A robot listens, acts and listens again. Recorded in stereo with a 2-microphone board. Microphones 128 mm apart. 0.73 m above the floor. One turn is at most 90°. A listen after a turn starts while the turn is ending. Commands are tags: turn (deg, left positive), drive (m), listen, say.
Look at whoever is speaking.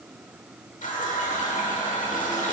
<listen/>
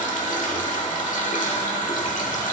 <listen/>
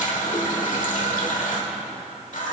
<say>I can't make out anyone speaking to turn to.</say>